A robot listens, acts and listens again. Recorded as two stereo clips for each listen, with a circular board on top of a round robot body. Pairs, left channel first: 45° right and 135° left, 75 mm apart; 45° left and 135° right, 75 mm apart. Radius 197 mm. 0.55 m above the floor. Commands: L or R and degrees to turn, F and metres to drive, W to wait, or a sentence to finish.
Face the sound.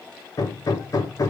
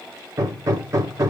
R85
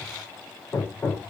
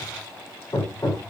L10
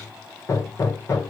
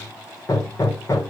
Facing the hammering.